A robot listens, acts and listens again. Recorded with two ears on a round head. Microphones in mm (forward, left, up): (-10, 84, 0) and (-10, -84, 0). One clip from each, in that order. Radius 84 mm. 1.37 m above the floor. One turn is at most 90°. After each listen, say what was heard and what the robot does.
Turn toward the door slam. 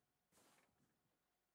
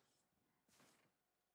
Keep listening.
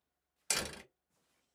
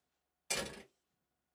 The door slam: about 45° left or 135° left. Turn 45° left.
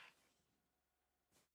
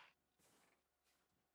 Keep listening.
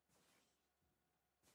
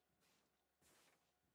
I heard a door slam, but can't make it out now. It was about straight ahead or 90° left.